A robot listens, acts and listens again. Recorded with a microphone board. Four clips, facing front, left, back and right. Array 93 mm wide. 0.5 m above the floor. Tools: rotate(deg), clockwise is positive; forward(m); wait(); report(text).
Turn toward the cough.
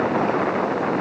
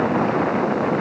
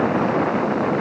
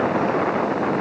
wait()
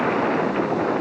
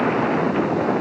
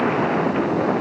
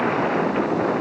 wait()
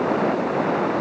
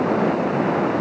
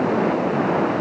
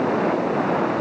report("I can't make out a cough.")